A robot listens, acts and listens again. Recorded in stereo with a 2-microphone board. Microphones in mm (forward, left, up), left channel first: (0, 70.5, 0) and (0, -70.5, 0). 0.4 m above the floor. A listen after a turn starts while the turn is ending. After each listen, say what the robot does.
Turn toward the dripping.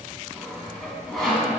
Keep listening.
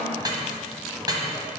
Turn 30° right.
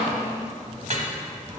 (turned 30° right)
Turn 120° right.
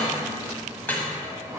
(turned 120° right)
Turn 15° left.
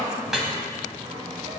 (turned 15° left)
Facing the dripping.